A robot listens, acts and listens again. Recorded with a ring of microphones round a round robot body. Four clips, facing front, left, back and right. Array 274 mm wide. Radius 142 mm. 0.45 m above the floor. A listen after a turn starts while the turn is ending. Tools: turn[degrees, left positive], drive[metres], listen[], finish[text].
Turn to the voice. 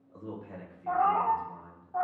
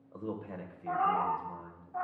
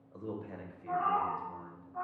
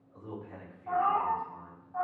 Thought: The man speaking: 100° left.
Action: turn[100]
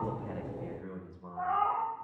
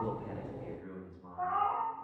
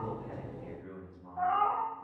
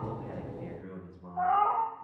Thought: The man speaking is now 25° right.
Action: turn[-25]
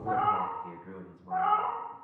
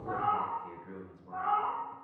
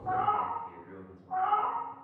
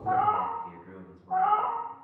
Thought: The man speaking is now 15° left.
Action: turn[15]
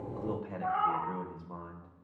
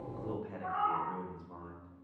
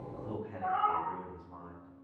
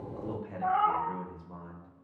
Action: finish[Found it: a man speaking, straight ahead.]